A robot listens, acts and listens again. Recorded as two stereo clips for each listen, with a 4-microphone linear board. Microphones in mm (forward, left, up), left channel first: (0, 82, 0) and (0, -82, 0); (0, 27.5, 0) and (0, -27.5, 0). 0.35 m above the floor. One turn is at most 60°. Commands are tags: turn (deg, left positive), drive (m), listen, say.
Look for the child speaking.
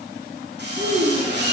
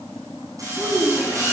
<turn deg="-50"/>
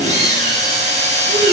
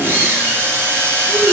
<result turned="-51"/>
<listen/>
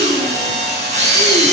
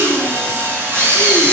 <listen/>
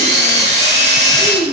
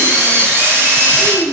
<turn deg="-40"/>
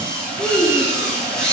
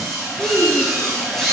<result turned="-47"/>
<turn deg="10"/>
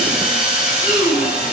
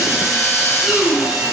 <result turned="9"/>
<say>Facing the child speaking.</say>